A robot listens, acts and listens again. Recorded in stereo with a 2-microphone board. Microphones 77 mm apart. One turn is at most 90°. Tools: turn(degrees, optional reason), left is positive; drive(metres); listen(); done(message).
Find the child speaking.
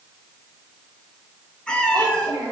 turn(degrees=-90)
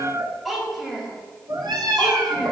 done("Facing the child speaking, over 4 m away.")